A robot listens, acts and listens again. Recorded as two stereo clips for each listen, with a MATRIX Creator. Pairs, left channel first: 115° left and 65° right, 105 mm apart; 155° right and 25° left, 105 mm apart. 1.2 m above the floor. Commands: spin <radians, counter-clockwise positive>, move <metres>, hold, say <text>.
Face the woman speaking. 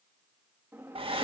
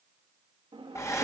hold
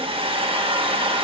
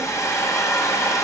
hold
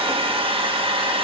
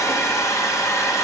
say I can't make out a woman speaking, only a hair dryer and a drawer.